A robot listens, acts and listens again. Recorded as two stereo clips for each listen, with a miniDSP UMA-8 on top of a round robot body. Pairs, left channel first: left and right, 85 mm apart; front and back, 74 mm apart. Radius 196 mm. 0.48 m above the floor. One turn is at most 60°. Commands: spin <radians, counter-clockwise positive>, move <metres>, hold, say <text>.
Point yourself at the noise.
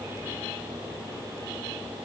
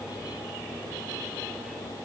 hold
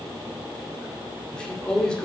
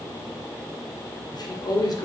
spin 0.17
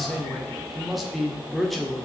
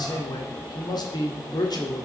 say Found it: a man speaking, straight ahead, 1 to 2 m away.